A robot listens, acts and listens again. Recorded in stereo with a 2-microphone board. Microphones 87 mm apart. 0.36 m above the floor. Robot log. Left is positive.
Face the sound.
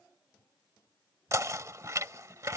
note: The knocking: about 40° right or 140° right.
cmd yaw -40
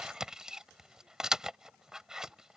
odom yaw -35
note: So it is at 10° right.
cmd yaw -10
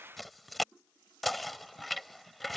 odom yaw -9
end: Found it: knocking, straight ahead.